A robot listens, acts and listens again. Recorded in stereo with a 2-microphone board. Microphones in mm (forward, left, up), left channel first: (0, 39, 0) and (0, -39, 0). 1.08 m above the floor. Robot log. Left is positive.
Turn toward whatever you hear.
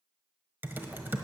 note: The typing on a keyboard: about 25° right or 155° right.
cmd yaw -25
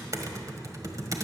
note: So it is at 125° right.
cmd yaw -125
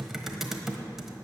end: Found it: typing on a keyboard, straight ahead, 1 to 2 m away.